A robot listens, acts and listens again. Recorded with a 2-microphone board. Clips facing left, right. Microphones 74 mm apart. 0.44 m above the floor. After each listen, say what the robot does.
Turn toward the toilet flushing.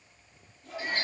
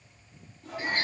Turn 90° right.
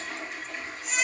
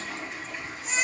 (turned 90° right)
Facing the toilet flushing.